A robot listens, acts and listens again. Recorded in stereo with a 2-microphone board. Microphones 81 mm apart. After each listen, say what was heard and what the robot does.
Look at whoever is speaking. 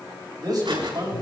The man speaking: about 55° right or 125° right. Turn 55° right.
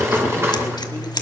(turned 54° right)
Keep listening.
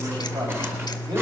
Keep listening.
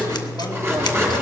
I heard a man speaking, but can't make it out now. It was about straight ahead or 70° right.